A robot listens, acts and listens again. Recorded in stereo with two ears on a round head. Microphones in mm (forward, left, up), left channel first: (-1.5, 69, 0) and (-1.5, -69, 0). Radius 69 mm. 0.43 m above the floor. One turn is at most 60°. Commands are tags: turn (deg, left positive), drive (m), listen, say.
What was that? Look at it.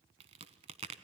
<turn deg="-40"/>
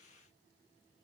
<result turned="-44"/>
<listen/>
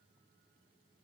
<say>I heard a crack, but can't make it out now. It was about 5° left or 95° right.</say>